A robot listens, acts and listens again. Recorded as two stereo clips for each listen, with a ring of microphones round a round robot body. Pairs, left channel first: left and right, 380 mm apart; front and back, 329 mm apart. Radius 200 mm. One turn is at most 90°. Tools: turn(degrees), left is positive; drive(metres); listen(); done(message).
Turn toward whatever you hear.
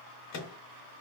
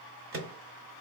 turn(degrees=90)
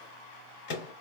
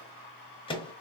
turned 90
turn(degrees=75)
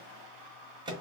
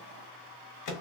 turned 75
turn(degrees=-15)
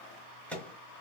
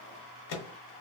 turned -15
done("Facing the microwave.")